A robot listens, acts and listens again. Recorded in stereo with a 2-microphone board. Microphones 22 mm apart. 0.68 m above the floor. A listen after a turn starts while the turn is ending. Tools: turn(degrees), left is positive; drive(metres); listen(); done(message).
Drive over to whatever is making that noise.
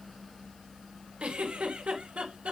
turn(degrees=-70)
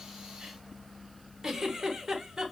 turn(degrees=-30)
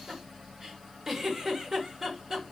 turn(degrees=-20)
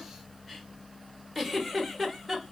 drive(metres=1.0)
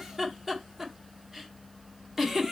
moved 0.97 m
turn(degrees=-10)
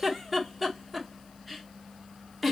drive(metres=1.0)
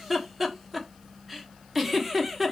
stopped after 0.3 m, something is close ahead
done("I am next to the giggle.")